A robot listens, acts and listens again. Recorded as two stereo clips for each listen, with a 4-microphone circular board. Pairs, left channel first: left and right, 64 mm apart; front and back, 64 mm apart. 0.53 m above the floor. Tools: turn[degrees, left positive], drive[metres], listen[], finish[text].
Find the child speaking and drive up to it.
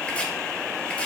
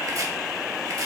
Action: listen[]
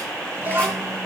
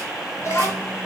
Thought: The child speaking: 40° right.
Action: turn[-40]
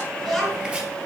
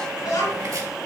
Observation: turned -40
Action: drive[1.0]
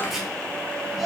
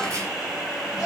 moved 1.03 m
Action: drive[1.0]
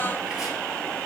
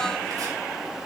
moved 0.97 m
Action: listen[]
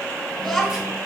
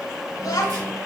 Action: drive[1.0]
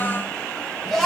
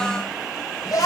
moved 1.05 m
Action: drive[1.0]
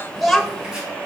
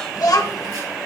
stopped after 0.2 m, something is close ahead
Action: finish[I am next to the child speaking.]